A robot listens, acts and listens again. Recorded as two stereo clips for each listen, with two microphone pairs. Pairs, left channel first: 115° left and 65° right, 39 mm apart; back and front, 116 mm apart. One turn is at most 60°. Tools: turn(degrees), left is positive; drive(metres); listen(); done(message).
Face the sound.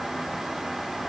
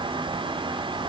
listen()
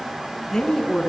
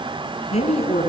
turn(degrees=-60)
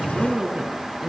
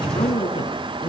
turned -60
turn(degrees=-60)
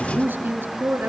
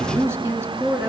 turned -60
turn(degrees=-60)
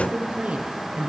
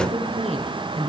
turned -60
turn(degrees=-10)
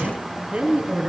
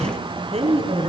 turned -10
done("Facing the woman speaking, over 4 m away.")